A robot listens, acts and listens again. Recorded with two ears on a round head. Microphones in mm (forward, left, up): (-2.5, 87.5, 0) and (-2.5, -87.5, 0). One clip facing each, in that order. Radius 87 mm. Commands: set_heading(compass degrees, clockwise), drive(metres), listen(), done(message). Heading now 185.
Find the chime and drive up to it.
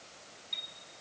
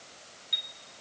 set_heading(215)
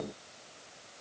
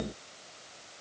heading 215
listen()
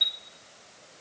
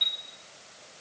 set_heading(195)
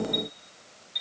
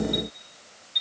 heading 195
drive(1.0)
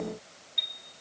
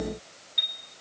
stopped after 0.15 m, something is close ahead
done("Something is in my way. I am facing the chime but have not reached it.")